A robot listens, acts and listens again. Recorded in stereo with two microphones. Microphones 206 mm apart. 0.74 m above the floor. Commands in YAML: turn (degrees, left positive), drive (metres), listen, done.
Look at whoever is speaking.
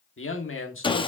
turn: 70
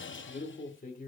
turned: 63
turn: 40
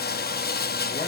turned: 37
listen: true
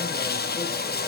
listen: true
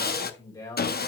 turn: 15
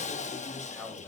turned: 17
done: "Facing the man speaking."